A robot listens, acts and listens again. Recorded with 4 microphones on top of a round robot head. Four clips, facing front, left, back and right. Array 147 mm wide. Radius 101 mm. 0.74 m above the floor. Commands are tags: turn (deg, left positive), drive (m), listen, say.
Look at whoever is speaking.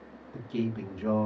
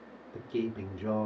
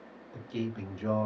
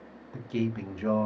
<turn deg="-105"/>
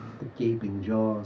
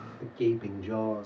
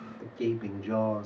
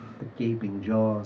<turn deg="-90"/>
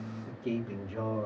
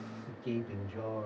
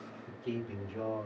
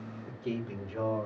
<turn deg="-40"/>
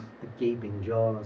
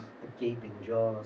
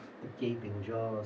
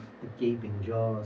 <turn deg="-10"/>
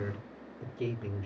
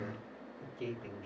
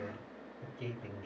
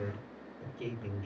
<say>Facing the man speaking, 2 to 4 m away.</say>